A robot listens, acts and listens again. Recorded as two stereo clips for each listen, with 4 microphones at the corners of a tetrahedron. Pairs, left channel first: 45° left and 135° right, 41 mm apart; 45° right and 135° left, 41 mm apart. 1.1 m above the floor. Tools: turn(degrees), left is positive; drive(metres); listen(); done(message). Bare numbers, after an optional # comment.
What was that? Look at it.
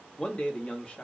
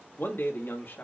# The man speaking: 15° right.
turn(-15)
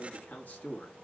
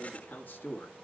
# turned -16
done("Facing the man speaking, 1 to 2 m away.")